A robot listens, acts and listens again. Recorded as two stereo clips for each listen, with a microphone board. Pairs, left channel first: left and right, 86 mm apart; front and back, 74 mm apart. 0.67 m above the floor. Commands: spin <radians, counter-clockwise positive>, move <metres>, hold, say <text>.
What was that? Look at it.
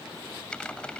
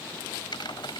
spin 0.17
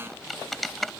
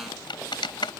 say Found it: typing on a keyboard, straight ahead.